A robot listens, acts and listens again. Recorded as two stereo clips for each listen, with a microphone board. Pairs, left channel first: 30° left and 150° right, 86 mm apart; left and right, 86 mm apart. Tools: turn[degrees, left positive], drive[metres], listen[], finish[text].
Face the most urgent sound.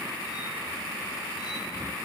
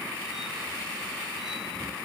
Action: listen[]
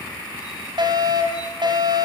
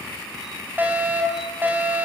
Thought: The fire alarm: 155° right.
Action: turn[-155]
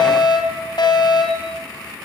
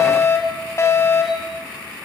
Thought: The fire alarm is now 40° left.
Action: turn[40]
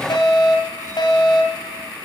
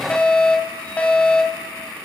Thought: The fire alarm is now 15° left.
Action: turn[15]
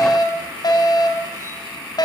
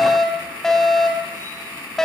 Action: finish[Facing the fire alarm, 2 to 4 m away.]